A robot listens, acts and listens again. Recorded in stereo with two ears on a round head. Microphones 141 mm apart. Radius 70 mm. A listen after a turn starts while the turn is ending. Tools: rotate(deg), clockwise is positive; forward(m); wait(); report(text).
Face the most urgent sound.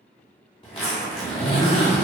wait()
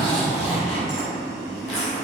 wait()
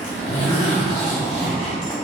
report("I can't make out anything urgent to turn to.")